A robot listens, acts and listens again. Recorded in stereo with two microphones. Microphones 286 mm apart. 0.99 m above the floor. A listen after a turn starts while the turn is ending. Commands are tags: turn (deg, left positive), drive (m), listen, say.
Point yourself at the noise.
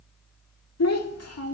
<turn deg="55"/>
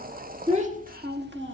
<turn deg="-40"/>
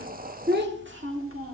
<turn deg="-50"/>
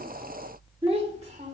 <turn deg="-25"/>
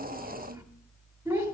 <turn deg="-10"/>
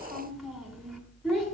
<say>Found it: a child speaking, straight ahead.</say>